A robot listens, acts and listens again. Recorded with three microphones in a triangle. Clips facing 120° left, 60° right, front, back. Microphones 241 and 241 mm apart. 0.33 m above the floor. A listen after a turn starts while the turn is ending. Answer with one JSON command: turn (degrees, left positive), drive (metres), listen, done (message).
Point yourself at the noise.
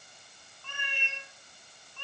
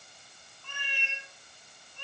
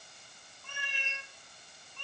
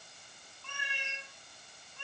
{"turn": 100}
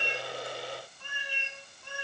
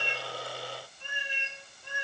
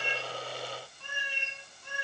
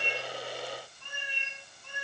{"turn": 10}
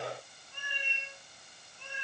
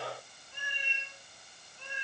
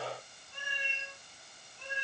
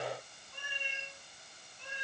{"turn": 10}
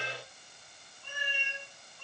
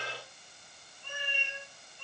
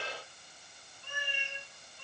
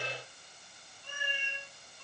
{"done": "Facing the cat meowing, over 4 m away."}